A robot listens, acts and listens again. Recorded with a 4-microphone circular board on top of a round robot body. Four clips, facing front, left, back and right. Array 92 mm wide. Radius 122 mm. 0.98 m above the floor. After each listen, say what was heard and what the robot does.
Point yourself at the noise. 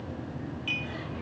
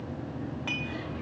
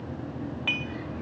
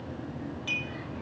The dishes clattering: 150° left. Turn 150° left.
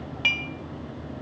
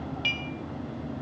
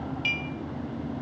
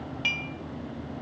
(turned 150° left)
The dishes clattering is now 10° right. Turn 10° right.
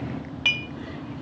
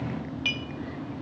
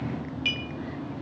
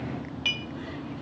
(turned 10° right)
Found it: dishes clattering, straight ahead, 1 to 2 m away.